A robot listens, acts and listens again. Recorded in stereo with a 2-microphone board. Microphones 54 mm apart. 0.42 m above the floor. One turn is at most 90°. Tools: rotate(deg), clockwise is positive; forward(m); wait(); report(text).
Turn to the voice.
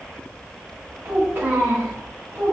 rotate(50)
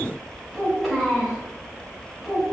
report("Found it: a child speaking, straight ahead.")